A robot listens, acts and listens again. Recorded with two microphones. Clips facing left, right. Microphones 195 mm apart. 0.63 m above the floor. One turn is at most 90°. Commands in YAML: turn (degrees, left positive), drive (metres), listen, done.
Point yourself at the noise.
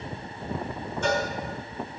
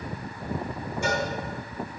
turn: -30
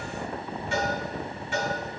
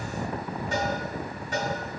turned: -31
turn: -90
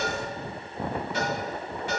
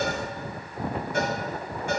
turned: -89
turn: -50
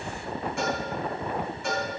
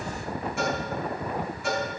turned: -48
done: "Facing the cowbell."